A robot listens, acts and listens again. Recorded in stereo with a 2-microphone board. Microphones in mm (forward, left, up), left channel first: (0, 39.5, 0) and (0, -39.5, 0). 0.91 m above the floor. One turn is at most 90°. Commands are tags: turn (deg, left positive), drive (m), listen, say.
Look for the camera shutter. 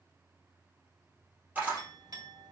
<turn deg="-20"/>
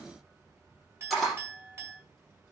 <say>Found it: a camera shutter, straight ahead.</say>